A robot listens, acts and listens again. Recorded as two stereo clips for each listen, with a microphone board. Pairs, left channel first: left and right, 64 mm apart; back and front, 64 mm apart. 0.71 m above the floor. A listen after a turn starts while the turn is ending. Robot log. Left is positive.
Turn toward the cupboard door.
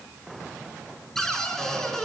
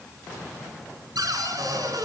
note: The cupboard door: 10° left.
cmd yaw +10
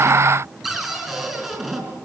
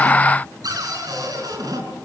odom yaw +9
end: Facing the cupboard door, over 4 m away.